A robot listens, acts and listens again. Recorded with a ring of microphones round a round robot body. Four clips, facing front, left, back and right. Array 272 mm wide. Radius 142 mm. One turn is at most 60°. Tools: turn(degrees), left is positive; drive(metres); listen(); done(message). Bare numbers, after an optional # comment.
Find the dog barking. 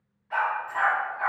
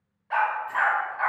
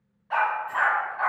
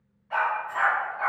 # The dog barking: 130° left.
turn(60)
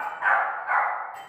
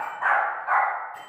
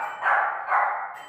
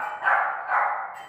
# The dog barking is now 75° left.
turn(60)
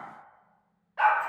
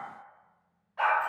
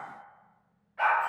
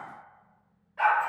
done("Facing the dog barking, 1 to 2 m away.")